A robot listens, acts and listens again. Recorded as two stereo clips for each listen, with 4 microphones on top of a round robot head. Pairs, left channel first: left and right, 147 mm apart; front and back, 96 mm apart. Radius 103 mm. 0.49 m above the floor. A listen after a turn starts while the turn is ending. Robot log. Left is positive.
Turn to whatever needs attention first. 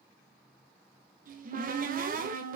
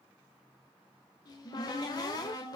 cmd idle
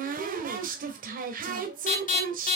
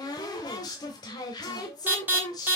note: The alarm: 110° left.
cmd yaw +110
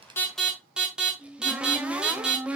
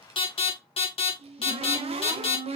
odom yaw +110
end: Found it: an alarm, straight ahead.